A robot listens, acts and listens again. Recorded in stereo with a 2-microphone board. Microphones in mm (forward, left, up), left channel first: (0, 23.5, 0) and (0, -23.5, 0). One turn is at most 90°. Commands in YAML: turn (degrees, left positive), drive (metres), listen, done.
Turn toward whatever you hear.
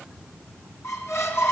turn: 70
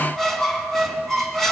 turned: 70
done: "Facing the squeak."